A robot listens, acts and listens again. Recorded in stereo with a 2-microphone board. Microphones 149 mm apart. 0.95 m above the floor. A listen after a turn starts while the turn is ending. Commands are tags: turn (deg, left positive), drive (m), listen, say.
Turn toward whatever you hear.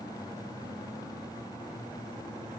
<listen/>
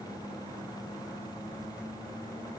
<listen/>
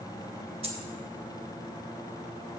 <turn deg="-40"/>
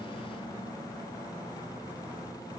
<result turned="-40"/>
<listen/>
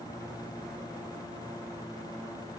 <say>I heard a dropped coin, but can't make it out now. It was about straight ahead or 100° right.</say>